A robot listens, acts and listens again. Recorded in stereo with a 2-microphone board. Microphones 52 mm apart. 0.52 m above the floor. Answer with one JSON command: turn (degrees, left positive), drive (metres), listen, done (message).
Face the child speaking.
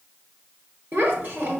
{"turn": -40}
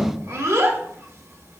{"turn": -100}
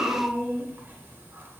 {"turn": -40}
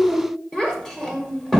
{"turn": 10}
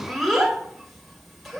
{"done": "Found it: a child speaking, straight ahead, 1 to 2 m away."}